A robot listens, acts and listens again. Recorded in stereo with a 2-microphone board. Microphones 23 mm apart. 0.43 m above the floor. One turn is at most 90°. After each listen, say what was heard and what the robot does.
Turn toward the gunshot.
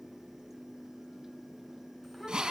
Keep listening.
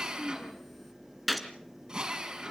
Turn 30° left.
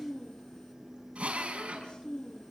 Keep listening.
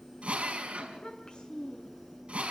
I heard a gunshot, but can't make it out now. It was about 30° right or 150° left.